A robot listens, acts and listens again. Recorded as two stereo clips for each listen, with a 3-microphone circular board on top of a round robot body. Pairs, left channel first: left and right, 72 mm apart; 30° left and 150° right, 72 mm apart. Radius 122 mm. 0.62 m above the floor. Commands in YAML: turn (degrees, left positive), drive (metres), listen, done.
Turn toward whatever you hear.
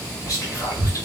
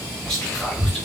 turn: 110
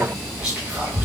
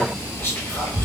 turn: -20
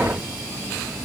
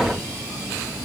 listen: true
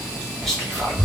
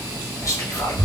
done: "Facing the whispering, 1 to 2 m away."